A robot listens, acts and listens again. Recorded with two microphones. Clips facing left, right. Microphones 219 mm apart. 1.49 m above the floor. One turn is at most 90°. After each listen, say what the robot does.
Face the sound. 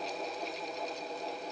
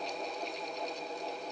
Keep listening.
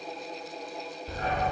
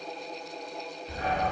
Turn 45° left.
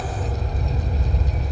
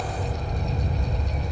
Turn 80° left.
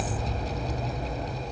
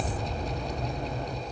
Turn 10° left.
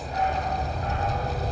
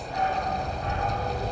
Found it: a dog barking, straight ahead, 1 to 2 m away.